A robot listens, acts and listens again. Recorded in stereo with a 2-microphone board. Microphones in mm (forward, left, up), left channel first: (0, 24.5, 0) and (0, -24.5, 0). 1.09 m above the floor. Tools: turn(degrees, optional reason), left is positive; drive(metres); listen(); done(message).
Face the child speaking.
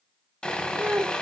turn(degrees=-30, reason="The child speaking: about 30° right or 150° right.")
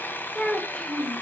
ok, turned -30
turn(degrees=15, reason="So it is at 15° left.")
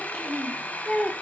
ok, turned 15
turn(degrees=15, reason="The child speaking is now 15° left.")
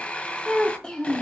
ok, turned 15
turn(degrees=30, reason="The child speaking is now 30° left.")
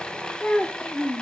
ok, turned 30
turn(degrees=40, reason="The child speaking is now 40° left.")
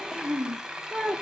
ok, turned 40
done("Facing the child speaking, 1 to 2 m away.")